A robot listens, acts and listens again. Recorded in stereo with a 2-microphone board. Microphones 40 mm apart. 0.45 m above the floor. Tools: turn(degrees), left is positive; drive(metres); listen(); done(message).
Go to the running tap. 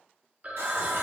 turn(degrees=-65)
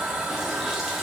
drive(metres=1.0)
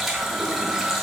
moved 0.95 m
drive(metres=1.0)
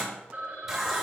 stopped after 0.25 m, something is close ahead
done("I am next to the running tap.")